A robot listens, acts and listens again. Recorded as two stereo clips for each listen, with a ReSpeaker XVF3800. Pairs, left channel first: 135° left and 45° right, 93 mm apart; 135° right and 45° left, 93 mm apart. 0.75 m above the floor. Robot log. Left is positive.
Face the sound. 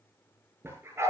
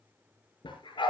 note: The dog barking: 105° right.
cmd yaw -105
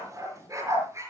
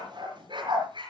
note: The dog barking is now 15° left.
cmd yaw +15
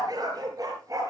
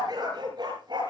end: Facing the dog barking, over 4 m away.